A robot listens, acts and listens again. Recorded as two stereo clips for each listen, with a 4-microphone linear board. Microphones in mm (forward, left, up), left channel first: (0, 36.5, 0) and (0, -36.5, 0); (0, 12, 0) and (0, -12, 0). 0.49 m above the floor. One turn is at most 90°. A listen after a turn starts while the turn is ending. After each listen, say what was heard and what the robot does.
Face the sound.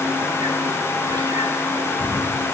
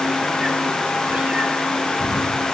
The cat meowing: about 60° right or 120° right. Turn 60° right.
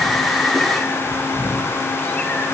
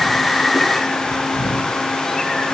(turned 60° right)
So it is at 20° left. Turn 20° left.
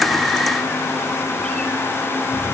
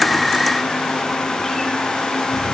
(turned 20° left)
The cat meowing is now 15° left. Turn 15° left.
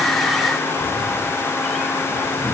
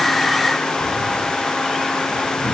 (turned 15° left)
Found it: a cat meowing, straight ahead.